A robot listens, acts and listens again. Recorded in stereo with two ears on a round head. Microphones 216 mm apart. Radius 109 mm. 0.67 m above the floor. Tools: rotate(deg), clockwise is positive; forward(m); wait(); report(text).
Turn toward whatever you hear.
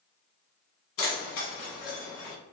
rotate(-55)
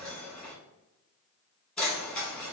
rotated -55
report("Found it: keys jangling, straight ahead, 1 to 2 m away.")